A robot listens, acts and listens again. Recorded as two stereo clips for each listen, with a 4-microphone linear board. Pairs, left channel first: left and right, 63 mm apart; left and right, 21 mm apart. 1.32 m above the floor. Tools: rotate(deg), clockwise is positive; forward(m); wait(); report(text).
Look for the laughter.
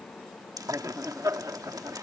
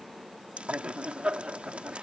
rotate(60)
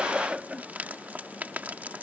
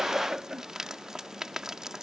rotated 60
rotate(15)
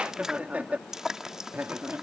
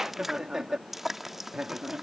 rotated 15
rotate(30)
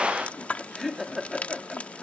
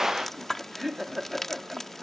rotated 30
report("Facing the laughter.")